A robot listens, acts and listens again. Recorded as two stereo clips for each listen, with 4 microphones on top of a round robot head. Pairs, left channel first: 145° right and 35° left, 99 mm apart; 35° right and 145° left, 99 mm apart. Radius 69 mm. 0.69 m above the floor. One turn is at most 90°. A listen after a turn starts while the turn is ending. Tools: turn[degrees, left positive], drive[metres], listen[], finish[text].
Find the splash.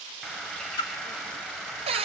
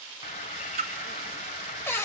Thought: The splash: 165° left.
Action: turn[90]
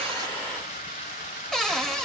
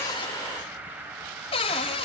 Thought: Nothing new. It was at 75° left.
Action: turn[75]
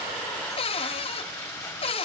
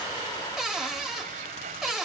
Action: finish[Facing where the splash came from. I can't hear it now.]